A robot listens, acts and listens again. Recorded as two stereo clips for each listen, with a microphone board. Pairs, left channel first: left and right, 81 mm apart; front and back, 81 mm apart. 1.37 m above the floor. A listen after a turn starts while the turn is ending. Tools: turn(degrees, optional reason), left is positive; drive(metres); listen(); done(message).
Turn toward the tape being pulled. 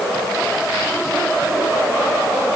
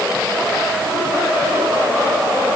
listen()
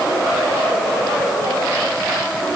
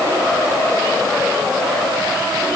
listen()
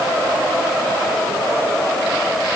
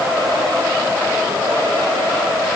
done("I can't make out tape being pulled to turn to.")